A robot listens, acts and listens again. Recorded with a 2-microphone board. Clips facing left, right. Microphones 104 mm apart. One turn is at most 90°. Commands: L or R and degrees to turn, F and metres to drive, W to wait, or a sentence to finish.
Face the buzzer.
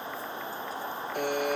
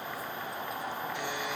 L55
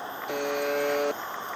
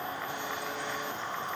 L70
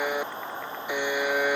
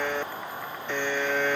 L10
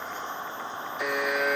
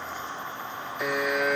Found it: a buzzer, straight ahead.